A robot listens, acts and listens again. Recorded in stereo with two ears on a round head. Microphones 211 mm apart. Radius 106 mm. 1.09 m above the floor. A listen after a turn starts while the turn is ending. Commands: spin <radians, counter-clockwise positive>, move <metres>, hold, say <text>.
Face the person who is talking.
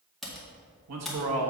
spin -1.22
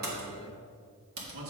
spin -1.13
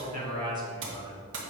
spin -0.44
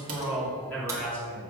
say Facing the man speaking.